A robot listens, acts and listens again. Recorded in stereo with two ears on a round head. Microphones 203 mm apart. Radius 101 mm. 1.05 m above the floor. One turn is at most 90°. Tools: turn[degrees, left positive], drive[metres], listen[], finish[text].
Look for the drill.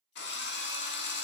Thought: The drill: about 50° left or 130° left.
Action: turn[50]
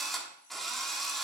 Action: finish[Facing the drill.]